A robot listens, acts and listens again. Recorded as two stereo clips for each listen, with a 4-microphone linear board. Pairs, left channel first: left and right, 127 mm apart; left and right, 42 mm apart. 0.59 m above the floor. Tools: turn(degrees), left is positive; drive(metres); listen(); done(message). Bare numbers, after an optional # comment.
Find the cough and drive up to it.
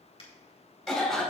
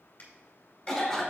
turn(30)
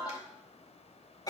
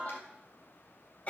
# So it is at 145° left.
turn(145)
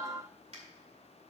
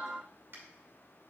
listen()
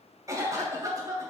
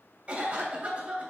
# The cough is now 25° right.
turn(-25)
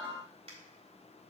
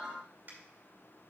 listen()
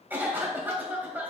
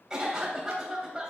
# The cough is now 15° right.
turn(-15)
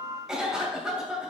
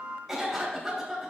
drive(1.0)
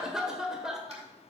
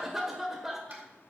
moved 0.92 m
drive(1.0)
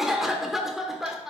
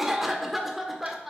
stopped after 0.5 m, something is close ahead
done("Arrived at the cough, straight ahead.")